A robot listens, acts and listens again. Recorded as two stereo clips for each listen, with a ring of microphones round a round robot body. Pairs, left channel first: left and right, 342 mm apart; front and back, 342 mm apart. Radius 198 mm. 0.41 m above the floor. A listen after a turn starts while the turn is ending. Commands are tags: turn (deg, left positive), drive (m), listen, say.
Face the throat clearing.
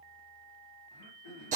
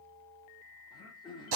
<turn deg="75"/>
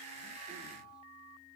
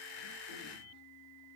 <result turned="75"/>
<listen/>
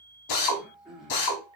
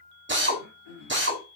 <say>Facing the throat clearing, over 4 m away.</say>